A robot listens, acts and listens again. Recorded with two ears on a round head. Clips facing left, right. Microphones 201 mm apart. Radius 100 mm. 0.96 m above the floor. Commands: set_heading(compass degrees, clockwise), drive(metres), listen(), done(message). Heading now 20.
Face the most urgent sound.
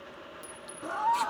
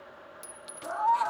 set_heading(340)
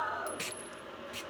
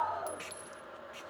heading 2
set_heading(342)
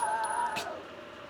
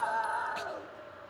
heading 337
done("Facing the scream, 1 to 2 m away.")